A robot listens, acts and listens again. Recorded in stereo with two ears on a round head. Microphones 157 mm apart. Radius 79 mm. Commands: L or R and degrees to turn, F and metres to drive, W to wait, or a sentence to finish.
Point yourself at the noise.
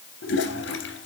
L70
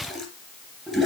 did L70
Facing the toilet flushing, 2 to 4 m away.